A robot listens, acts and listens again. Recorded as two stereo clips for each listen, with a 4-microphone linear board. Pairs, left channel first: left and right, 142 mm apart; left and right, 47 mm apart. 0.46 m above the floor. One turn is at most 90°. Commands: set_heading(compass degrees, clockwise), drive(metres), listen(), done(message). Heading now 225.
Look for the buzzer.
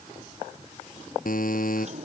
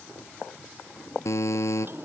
set_heading(135)
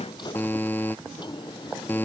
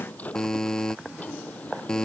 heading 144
set_heading(134)
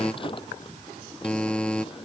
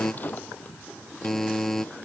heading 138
done("Found it: a buzzer, straight ahead.")